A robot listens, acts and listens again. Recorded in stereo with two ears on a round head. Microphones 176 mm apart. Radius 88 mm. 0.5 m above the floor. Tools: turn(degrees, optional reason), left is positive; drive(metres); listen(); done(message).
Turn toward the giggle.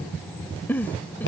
turn(degrees=30)
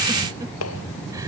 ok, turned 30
listen()
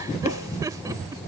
listen()
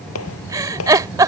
turn(degrees=-20, reason="So it is at 20° right.")
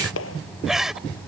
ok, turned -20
done("Found it: a giggle, straight ahead.")